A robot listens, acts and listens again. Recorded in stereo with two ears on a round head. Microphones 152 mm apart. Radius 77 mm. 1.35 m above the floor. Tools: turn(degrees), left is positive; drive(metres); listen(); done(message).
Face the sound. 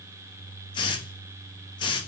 turn(degrees=25)
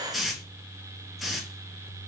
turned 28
done("Found it: a hiss, straight ahead.")